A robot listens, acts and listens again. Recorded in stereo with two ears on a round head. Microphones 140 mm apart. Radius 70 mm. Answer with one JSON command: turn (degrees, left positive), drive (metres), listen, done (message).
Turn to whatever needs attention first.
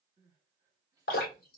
{"turn": -20}
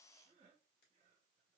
{"turn": -135}
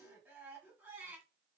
{"turn": -15}
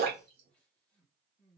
{"done": "Facing the crying."}